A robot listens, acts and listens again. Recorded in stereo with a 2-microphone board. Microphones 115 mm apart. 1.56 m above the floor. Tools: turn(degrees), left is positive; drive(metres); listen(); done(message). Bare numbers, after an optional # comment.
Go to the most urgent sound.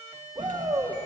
# The shout: about 45° right or 135° right.
turn(-45)
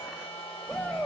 drive(1.0)
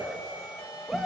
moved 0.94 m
drive(1.0)
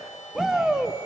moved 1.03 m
drive(1.0)
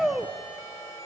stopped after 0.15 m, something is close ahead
done("Arrived at the shout, straight ahead.")